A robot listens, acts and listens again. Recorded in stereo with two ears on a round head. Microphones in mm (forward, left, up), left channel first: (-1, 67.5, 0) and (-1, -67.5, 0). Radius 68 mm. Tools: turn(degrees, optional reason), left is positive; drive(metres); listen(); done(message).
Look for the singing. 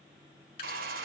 listen()
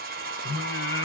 turn(degrees=90)
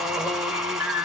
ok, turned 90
turn(degrees=-10, reason="So it is at 10° right.")
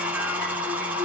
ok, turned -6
done("Found it: singing, straight ahead.")